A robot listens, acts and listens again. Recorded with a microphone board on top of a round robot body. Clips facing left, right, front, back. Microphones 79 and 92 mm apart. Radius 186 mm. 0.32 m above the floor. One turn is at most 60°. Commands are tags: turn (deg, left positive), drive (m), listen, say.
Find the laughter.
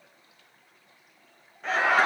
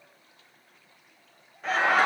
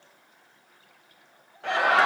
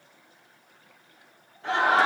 <say>Facing the laughter.</say>